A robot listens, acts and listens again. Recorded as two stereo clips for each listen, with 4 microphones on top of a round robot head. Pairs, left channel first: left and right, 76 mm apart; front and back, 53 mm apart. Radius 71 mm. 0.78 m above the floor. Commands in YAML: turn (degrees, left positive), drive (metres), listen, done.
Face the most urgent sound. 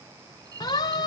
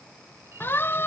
turn: 50
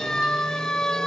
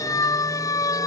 done: "Found it: a siren, straight ahead."